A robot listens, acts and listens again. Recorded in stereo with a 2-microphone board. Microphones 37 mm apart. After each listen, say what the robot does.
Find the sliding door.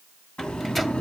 Turn 35° left.
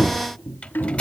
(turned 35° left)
Turn 110° left.
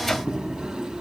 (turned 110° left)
Turn 30° right.
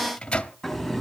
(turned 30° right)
Found it: a sliding door, straight ahead.